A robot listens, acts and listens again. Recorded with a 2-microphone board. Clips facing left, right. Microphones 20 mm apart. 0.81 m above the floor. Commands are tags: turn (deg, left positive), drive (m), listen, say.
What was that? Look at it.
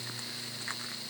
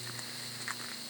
<listen/>
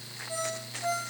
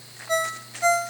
<turn deg="-90"/>
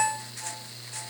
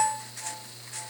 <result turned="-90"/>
<turn deg="10"/>
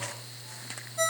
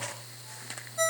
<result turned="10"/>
<say>Found it: a ringtone, straight ahead, 2 to 4 m away.</say>